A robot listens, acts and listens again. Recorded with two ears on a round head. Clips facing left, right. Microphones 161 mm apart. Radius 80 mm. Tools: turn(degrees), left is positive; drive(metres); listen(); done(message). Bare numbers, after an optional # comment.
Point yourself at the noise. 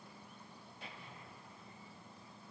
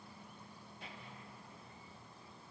listen()
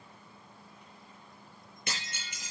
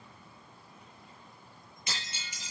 # The breaking glass: about 50° left or 130° left.
turn(50)
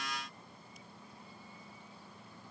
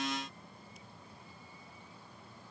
listen()
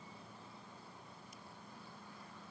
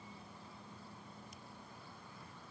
done("I heard breaking glass, but can't make it out now. It was about straight ahead or 80° left.")